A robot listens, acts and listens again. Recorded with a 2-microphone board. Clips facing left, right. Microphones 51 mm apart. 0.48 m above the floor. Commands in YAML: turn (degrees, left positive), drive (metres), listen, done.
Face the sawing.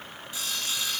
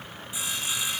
turn: -20
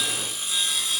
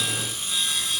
done: "Found it: sawing, straight ahead, 2 to 4 m away."